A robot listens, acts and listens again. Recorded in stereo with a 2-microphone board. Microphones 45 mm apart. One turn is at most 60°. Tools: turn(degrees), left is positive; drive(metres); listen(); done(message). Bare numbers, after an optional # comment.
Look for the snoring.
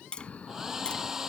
# The snoring: about 30° left or 150° left.
turn(30)
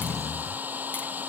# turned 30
done("Found it: snoring, straight ahead.")